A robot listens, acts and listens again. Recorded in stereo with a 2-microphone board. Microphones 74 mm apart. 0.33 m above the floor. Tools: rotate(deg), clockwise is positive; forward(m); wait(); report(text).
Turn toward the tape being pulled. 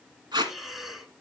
rotate(90)
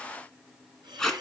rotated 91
rotate(-10)
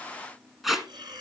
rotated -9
report("Facing the tape being pulled.")